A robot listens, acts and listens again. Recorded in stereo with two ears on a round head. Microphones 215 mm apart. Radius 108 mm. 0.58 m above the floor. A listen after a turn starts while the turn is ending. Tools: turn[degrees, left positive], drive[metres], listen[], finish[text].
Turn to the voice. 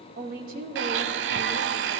Thought: The woman speaking: about 40° right or 140° right.
Action: turn[-40]
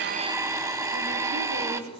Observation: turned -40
Action: listen[]
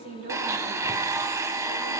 Thought: So it is at 115° right.
Action: turn[-115]
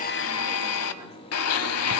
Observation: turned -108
Action: listen[]
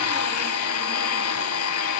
Action: listen[]
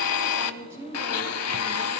Thought: The woman speaking is now 10° right.
Action: turn[-10]
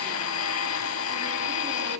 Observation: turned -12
Action: listen[]
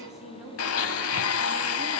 Action: finish[Facing the woman speaking.]